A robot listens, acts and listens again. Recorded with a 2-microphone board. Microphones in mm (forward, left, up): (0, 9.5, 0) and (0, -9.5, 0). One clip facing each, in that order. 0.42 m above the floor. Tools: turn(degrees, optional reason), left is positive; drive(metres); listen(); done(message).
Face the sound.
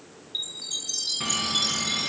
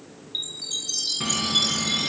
turn(degrees=-30)
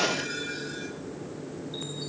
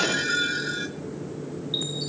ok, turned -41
turn(degrees=-125, reason="So it is at 125° right.")
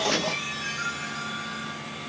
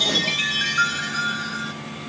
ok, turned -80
turn(degrees=-45, reason="The chime is now 45° right.")
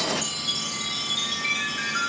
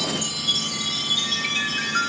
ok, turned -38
turn(degrees=-10, reason="The chime is now 10° right.")
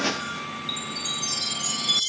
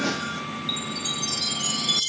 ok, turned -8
done("Found it: a chime, straight ahead.")